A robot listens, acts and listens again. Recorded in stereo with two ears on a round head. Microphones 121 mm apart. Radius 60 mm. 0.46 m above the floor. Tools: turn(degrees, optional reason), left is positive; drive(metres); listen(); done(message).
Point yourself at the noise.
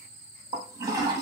turn(degrees=-30, reason="The toilet flushing: about 30° right or 150° right.")
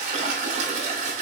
turn(degrees=-120, reason="So it is at 120° right.")
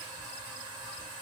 turn(degrees=-35, reason="The toilet flushing is now 35° right.")
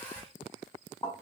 turn(degrees=15, reason="The toilet flushing is now 15° left.")
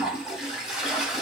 done("Found it: a toilet flushing, straight ahead, 1 to 2 m away.")